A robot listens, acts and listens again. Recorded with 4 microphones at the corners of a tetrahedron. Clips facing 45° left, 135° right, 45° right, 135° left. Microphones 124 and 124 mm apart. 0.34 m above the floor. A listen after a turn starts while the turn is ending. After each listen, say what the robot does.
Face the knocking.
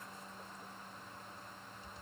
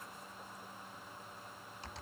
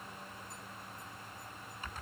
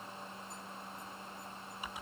Keep listening.
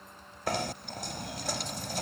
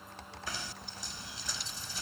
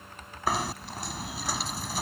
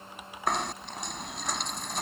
Turn 40° left.
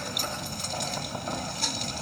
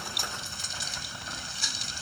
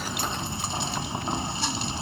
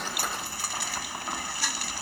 Turn 15° left.
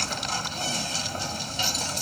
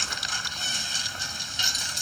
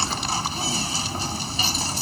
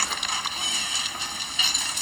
Facing the knocking.